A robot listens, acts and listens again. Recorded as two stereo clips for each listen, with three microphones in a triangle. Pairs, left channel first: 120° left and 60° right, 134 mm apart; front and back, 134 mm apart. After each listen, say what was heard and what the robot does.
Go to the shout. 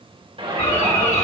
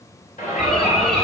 The shout: 15° right. Turn 15° right.
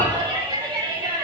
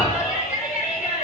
Drive 1.0 m forward.
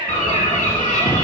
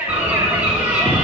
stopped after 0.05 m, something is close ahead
Blocked. The shout is further on, straight ahead.